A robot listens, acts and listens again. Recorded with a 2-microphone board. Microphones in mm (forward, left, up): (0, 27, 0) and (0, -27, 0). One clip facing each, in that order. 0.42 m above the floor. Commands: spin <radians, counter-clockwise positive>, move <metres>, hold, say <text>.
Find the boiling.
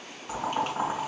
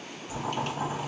spin 1.22
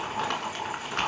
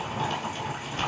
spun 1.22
say Facing the boiling.